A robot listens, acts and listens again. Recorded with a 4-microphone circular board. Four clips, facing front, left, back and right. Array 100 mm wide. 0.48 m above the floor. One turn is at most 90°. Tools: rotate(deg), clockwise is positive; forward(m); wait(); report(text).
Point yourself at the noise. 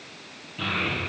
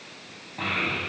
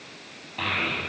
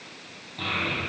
rotate(-90)
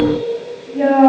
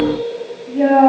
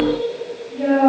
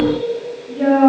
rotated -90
rotate(-45)
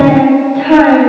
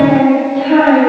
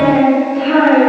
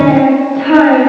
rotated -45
rotate(15)
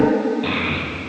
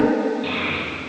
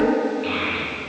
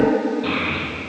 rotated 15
report("Found it: a child speaking, straight ahead.")